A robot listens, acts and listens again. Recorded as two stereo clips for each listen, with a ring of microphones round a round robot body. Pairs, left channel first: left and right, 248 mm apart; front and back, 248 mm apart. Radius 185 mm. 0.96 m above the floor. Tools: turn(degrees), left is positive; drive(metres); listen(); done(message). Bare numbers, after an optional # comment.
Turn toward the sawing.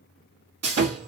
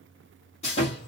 # The sawing: 70° right.
turn(-70)
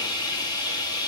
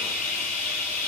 # The sawing is now 15° left.
turn(15)
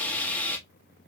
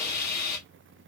done("Facing the sawing, 1 to 2 m away.")